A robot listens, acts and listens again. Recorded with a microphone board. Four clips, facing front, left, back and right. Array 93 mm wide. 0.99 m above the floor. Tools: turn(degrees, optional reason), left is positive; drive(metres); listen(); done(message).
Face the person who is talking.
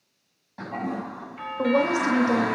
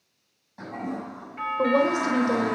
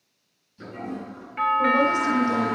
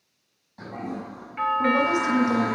turn(degrees=55, reason="The woman speaking: 55° left.")
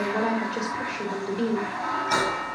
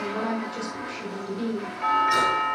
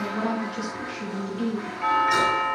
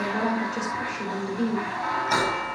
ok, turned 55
turn(degrees=-10, reason="The woman speaking is now 10° right.")
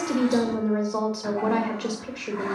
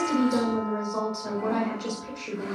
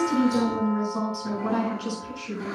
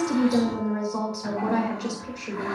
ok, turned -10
done("Found it: a woman speaking, straight ahead.")